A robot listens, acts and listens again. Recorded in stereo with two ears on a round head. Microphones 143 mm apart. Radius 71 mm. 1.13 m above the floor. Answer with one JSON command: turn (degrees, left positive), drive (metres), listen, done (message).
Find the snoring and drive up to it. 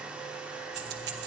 {"listen": true}
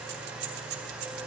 {"listen": true}
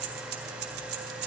{"done": "I can't make out snoring, only keys jangling."}